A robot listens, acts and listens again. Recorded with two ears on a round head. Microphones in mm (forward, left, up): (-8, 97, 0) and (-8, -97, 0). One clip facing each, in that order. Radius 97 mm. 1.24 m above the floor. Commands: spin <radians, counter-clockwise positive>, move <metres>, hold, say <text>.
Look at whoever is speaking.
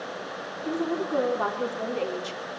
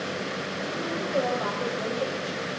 spin 1.57
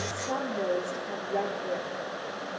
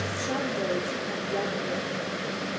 spin -0.17
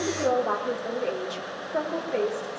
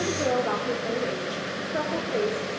say Facing the woman speaking, over 4 m away.